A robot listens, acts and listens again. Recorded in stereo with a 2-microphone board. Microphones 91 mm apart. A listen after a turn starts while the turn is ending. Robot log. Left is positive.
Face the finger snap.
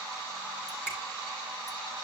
cmd idle
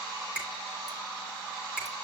cmd yaw -30
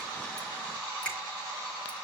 note: So it is at 15° left.
cmd yaw +15
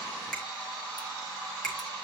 end: Facing the finger snap, 2 to 4 m away.